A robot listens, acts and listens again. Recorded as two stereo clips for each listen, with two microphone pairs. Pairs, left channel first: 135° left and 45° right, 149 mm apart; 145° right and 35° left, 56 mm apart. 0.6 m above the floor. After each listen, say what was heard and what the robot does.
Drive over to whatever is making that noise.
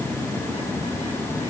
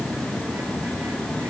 Keep listening.
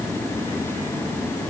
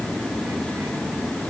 Keep listening.
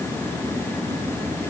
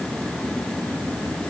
I can't make out anything.